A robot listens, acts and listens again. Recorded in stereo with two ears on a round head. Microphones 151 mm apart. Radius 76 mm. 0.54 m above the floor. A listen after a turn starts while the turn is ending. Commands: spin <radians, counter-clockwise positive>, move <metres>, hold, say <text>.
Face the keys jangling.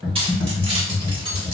spin -0.52
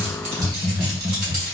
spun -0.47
spin -2.18
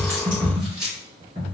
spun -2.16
say Facing the keys jangling, 2 to 4 m away.